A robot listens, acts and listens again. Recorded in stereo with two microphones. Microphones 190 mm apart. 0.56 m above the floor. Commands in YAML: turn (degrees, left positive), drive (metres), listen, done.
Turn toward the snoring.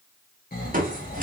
turn: 50
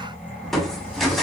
turn: 10
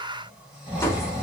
done: "Found it: snoring, straight ahead, 1 to 2 m away."